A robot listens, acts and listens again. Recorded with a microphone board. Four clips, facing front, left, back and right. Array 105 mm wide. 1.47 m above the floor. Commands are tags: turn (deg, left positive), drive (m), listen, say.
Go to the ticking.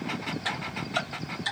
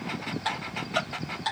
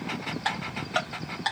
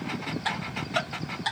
<turn deg="180"/>
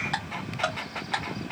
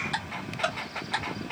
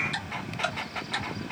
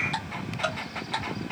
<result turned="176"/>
<drive m="1.0"/>
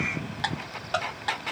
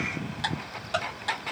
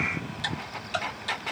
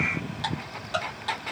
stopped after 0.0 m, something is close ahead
<say>Something is in my way. I am facing the ticking but have not reached it.</say>